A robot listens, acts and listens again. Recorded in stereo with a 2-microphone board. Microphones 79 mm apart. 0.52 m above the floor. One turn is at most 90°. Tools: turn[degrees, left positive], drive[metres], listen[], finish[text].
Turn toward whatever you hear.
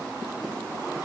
Action: listen[]
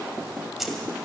Action: turn[30]
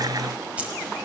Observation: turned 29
Thought: So it is at 15° right.
Action: turn[-15]
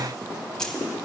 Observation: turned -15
Thought: The keys jangling is now 10° left.
Action: turn[10]
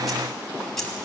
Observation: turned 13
Action: finish[Facing the keys jangling, 2 to 4 m away.]